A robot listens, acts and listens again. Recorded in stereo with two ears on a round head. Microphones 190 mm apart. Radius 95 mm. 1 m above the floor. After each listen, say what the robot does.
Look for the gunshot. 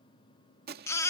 Turn 45° right.
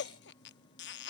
Keep listening.
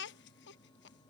I heard a gunshot, but can't make it out now. It was about straight ahead or 90° right.